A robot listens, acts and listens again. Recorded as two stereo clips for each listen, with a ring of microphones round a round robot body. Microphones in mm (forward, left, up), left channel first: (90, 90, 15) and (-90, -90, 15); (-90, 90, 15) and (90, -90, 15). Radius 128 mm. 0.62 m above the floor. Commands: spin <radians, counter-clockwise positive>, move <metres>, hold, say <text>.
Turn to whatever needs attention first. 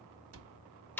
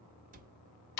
hold
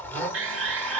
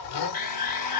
spin -2.97
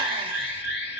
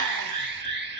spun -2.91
say Found it: an alarm, straight ahead.